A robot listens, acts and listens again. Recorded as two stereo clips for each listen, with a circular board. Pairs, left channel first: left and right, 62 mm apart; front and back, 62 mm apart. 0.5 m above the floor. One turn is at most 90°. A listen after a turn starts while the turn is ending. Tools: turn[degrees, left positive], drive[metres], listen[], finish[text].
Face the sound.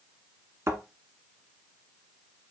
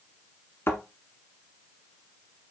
Thought: The thud: 50° right.
Action: turn[-50]
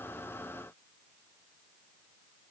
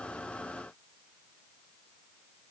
Action: finish[I heard a thud from this way, but can't make it out now.]